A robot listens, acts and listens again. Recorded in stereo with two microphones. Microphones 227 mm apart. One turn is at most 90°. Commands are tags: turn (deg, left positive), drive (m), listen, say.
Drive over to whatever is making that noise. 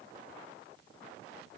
<listen/>
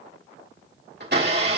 <turn deg="-50"/>
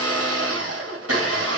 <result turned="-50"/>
<turn deg="-80"/>
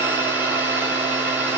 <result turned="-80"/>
<turn deg="-10"/>
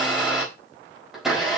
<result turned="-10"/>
<drive m="1.0"/>
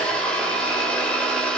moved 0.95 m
<drive m="1.0"/>
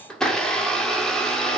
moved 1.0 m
<drive m="1.0"/>
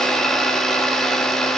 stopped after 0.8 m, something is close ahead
<say>Arrived at the blender, straight ahead.</say>